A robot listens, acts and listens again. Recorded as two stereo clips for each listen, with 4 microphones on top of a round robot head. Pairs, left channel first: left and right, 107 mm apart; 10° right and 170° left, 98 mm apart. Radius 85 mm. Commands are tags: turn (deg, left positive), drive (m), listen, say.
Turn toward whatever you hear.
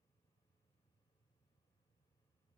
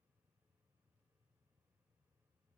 <listen/>
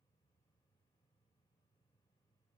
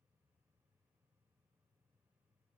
<listen/>
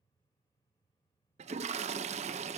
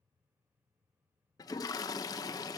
<turn deg="-70"/>
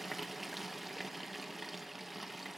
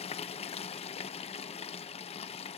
<say>Facing the toilet flushing, 1 to 2 m away.</say>